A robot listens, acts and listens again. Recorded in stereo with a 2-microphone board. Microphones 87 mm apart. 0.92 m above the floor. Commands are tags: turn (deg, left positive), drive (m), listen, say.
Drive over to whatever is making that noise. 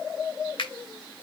<turn deg="65"/>
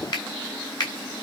<turn deg="50"/>
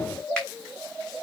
<listen/>
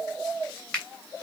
<turn deg="10"/>
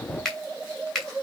<drive m="1.0"/>
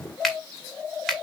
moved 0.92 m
<drive m="1.0"/>
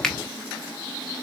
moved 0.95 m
<drive m="1.0"/>
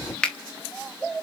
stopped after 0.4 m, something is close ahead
<turn deg="10"/>
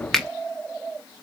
<say>I am next to the finger snap.</say>